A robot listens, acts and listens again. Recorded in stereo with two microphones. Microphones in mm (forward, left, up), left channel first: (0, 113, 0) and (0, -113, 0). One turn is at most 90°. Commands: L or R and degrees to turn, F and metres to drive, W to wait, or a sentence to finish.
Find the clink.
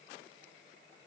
W
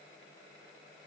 W
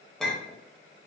L30
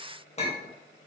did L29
L90
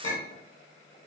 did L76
L70
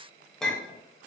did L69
Found it: a clink, straight ahead, under 1 m away.